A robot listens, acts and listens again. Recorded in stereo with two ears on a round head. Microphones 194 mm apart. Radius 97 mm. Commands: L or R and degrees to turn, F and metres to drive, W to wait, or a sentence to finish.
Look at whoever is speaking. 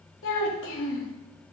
L65
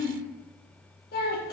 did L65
L45
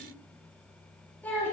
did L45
L10
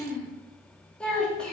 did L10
Facing the child speaking, 2 to 4 m away.